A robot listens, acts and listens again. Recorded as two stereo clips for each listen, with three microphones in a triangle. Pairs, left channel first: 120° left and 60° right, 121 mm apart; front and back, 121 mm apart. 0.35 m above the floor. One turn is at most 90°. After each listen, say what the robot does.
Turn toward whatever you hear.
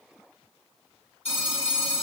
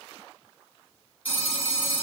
Turn 90° left.
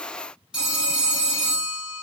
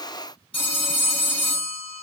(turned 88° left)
Turn 20° left.
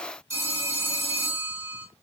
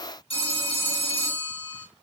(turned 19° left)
Facing the phone ringing, 1 to 2 m away.